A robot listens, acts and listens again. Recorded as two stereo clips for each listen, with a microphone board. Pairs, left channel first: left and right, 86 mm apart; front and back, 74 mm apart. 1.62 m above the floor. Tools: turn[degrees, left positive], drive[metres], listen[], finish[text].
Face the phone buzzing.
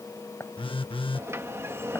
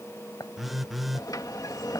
Thought: The phone buzzing: 90° left.
Action: turn[90]
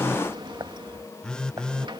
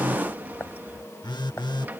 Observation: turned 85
Thought: The phone buzzing is now 10° left.
Action: turn[10]
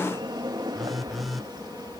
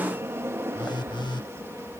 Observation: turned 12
Action: finish[Found it: a phone buzzing, straight ahead.]